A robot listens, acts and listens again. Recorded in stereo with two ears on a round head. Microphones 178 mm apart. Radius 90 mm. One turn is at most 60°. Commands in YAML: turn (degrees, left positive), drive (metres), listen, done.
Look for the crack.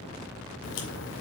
turn: 60
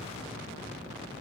listen: true
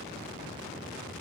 done: "I heard a crack, but can't make it out now. It was about 5° left or 55° left."